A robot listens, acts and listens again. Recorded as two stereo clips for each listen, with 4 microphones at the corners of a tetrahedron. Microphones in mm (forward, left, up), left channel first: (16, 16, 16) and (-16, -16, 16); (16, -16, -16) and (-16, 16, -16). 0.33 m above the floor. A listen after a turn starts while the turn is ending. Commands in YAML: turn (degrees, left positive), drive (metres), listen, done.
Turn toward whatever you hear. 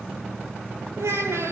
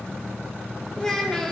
turn: -125
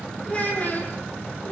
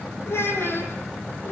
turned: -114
done: "Found it: a child speaking, straight ahead, over 4 m away."